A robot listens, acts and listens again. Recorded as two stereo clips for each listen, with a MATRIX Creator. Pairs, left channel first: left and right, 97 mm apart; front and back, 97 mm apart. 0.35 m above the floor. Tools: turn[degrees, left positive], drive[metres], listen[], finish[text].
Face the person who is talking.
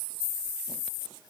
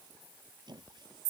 Action: listen[]
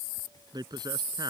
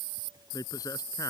Thought: The man speaking: 50° right.
Action: turn[-50]
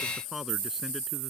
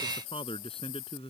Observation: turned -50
Action: finish[Facing the man speaking.]